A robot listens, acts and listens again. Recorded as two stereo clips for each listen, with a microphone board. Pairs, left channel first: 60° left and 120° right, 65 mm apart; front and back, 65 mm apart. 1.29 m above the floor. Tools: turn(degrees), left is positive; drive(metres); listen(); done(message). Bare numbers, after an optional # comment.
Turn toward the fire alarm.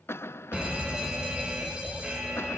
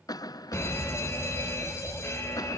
# The fire alarm: 45° right.
turn(-45)
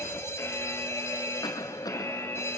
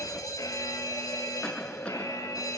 # The fire alarm is now 15° left.
turn(15)
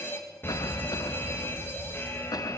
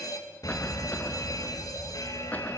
# The fire alarm is now 10° left.
turn(10)
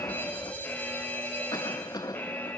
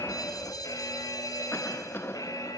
done("Facing the fire alarm.")